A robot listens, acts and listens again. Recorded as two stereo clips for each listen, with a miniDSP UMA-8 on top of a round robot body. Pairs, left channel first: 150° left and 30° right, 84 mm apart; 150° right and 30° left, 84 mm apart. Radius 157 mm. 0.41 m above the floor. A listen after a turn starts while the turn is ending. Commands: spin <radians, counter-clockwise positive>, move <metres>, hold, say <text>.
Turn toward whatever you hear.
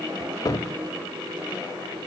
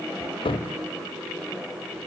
spin -2.79
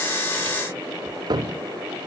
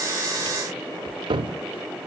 say Found it: a cupboard door, straight ahead.